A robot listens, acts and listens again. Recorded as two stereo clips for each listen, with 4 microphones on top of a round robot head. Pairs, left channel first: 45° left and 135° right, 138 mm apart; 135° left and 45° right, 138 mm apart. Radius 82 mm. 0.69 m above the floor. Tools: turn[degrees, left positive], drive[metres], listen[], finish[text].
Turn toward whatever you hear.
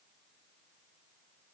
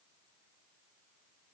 Action: listen[]
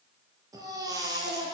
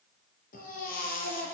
Thought: The baby crying: 160° left.
Action: turn[160]
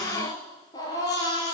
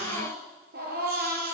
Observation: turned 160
Thought: The baby crying is now 20° right.
Action: turn[-20]
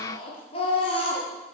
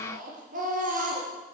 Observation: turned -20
Thought: The baby crying is now 10° right.
Action: turn[-10]
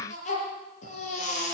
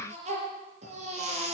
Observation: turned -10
Action: finish[Found it: a baby crying, straight ahead, over 4 m away.]